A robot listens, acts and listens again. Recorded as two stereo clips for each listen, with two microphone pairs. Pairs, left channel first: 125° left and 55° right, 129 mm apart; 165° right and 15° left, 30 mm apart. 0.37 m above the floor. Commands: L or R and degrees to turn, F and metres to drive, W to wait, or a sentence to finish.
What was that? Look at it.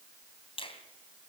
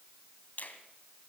L165
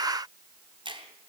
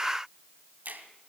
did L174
R10
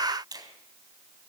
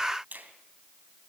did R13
Facing the finger snap, 2 to 4 m away.